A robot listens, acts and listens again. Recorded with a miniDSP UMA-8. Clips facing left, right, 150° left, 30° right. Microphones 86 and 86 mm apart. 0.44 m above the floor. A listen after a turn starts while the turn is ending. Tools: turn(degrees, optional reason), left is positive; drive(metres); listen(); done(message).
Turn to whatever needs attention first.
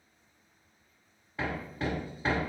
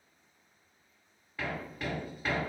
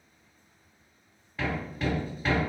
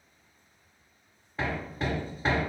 listen()
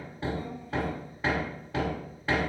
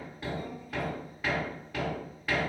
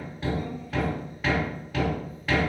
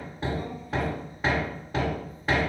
listen()
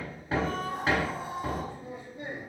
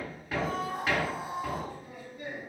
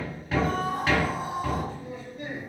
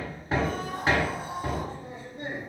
turn(degrees=-170, reason="The scream: 170° right.")
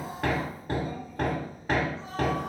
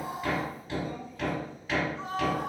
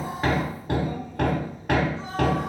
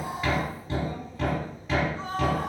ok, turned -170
turn(degrees=-70, reason="The scream is now 70° right.")
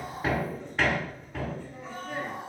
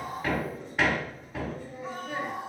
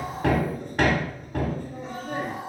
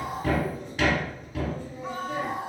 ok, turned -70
turn(degrees=-10, reason="The scream is now 10° right.")
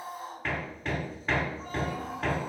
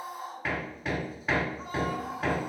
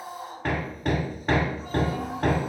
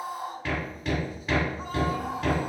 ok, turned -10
done("Found it: a scream, straight ahead, 2 to 4 m away.")